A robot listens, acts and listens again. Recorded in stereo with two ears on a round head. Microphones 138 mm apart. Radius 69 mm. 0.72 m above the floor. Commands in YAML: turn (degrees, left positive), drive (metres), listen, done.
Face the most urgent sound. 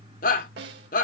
turn: 55
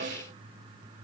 listen: true
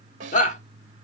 turn: 55
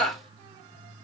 done: "Found it: a shout, straight ahead."